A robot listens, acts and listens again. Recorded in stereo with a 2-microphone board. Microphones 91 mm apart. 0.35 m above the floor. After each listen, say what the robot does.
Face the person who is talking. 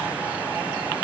Keep listening.
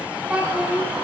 Turn 30° right.
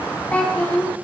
Turn 15° left.
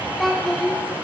Facing the child speaking.